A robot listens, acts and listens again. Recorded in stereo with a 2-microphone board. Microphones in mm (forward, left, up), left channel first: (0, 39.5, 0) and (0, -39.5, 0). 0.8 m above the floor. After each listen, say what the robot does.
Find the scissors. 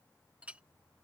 Keep listening.
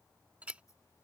Turn 45° left.
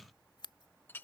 Turn 90° left.
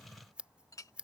Turn 15° right.
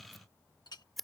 Facing the scissors.